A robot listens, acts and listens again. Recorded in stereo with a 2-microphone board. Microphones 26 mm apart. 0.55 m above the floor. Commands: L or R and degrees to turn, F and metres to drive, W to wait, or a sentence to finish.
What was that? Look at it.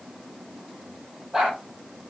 R20
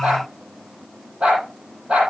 R140
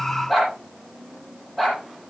Facing the dog barking, over 4 m away.